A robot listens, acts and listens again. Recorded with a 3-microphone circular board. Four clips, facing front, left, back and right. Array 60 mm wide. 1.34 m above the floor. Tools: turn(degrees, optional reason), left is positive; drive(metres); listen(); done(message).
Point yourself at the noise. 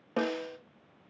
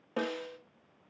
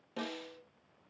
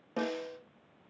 turn(degrees=15, reason="The snare drum: 15° left.")
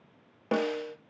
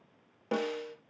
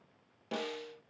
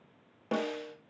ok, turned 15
done("Facing the snare drum, 1 to 2 m away.")